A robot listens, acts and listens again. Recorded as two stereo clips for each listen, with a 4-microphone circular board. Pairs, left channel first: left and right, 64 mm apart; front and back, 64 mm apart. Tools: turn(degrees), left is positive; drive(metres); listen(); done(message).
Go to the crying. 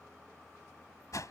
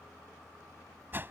listen()
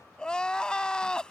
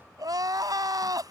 turn(degrees=170)
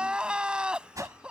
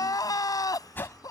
turn(degrees=-15)
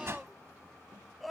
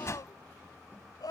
drive(metres=1.0)
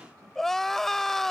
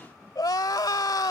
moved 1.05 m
drive(metres=1.0)
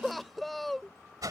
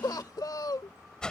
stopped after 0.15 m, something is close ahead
done("I am next to the crying.")